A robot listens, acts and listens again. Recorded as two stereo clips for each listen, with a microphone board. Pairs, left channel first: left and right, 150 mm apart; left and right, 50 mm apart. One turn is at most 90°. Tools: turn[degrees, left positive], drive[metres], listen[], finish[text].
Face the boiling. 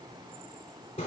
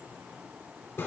Action: listen[]
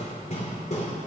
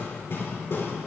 Action: listen[]
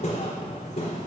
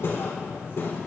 Action: finish[I can't make out boiling, only hammering.]